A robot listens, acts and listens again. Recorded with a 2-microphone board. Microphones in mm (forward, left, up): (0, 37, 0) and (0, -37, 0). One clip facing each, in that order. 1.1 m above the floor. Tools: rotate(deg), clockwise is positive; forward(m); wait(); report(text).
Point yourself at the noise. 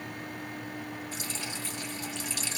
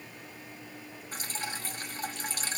rotate(40)
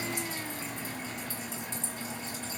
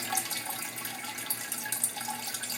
rotate(95)
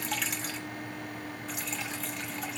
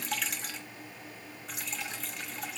report("Found it: dripping, straight ahead, under 1 m away.")